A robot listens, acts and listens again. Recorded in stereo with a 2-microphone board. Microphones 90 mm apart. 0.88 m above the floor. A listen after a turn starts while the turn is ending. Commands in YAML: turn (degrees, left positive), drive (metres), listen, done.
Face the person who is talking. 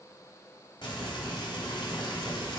listen: true
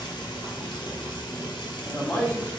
turn: 30
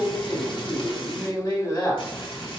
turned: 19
turn: 130
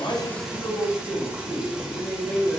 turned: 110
turn: 20
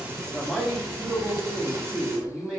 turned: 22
done: "Facing the man speaking, 1 to 2 m away."